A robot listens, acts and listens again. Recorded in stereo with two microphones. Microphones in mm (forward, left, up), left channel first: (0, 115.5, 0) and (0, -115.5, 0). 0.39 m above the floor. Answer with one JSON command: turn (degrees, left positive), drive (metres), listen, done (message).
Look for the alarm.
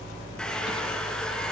{"listen": true}
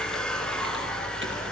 {"listen": true}
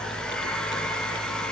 {"done": "I can't make out an alarm to turn to."}